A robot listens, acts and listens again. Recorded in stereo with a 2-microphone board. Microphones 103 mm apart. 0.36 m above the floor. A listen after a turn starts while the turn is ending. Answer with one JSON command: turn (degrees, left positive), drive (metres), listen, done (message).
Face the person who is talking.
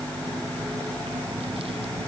{"listen": true}
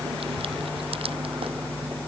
{"listen": true}
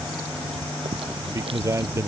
{"turn": -25}
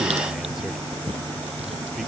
{"done": "Found it: a man speaking, straight ahead."}